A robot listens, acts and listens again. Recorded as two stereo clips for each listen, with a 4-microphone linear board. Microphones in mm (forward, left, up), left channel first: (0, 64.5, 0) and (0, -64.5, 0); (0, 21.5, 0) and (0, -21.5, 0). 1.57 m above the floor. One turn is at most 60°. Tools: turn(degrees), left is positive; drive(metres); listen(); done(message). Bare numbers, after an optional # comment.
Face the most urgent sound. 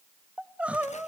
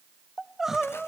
turn(-30)
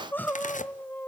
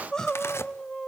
# So it is at 15° left.
turn(15)
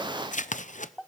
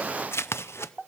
done("Found it: crying, straight ahead, under 1 m away.")